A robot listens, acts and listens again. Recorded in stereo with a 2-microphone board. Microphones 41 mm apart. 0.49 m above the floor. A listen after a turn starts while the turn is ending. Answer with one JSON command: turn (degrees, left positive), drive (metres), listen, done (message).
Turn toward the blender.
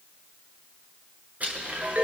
{"turn": -40}
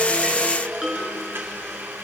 {"turn": -95}
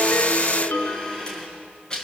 {"turn": 20}
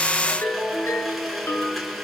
{"done": "Found it: a blender, straight ahead."}